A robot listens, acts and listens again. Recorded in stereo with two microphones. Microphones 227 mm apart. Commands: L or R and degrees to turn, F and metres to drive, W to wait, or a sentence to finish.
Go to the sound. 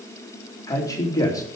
L30
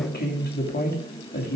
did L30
L135
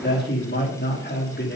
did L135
L50
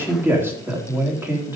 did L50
R10
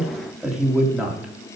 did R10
F1.0
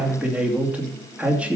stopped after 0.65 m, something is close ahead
Blocked. The man speaking is further on, straight ahead.